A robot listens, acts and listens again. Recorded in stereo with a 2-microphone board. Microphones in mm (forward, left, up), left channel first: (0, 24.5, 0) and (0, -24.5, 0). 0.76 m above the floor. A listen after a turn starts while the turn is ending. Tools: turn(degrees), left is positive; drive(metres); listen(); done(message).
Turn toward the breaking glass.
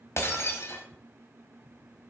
turn(degrees=70)
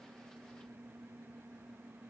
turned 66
listen()
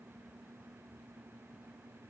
done("I heard breaking glass, but can't make it out now. It was about straight ahead or 45° left.")